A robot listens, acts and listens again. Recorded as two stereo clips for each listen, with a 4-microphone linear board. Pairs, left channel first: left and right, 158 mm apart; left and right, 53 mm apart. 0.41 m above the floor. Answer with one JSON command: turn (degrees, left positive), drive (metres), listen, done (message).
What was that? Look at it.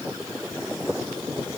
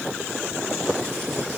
{"listen": true}
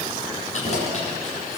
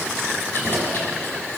{"turn": 45}
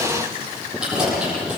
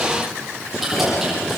{"done": "Found it: keys jangling, straight ahead, over 4 m away."}